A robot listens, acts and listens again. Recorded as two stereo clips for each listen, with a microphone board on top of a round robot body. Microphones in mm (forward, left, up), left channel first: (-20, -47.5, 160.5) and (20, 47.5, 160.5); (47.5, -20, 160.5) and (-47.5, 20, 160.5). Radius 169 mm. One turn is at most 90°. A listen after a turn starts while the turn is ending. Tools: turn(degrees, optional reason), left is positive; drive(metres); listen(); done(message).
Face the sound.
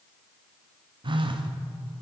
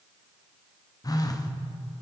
turn(degrees=30, reason="The phone buzzing: 30° left.")
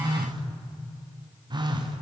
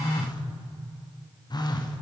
turn(degrees=25, reason="The phone buzzing is now 25° left.")
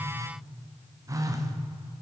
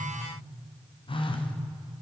turn(degrees=10, reason="The phone buzzing is now 10° left.")
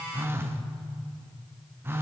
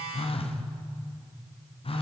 done("Found it: a phone buzzing, straight ahead.")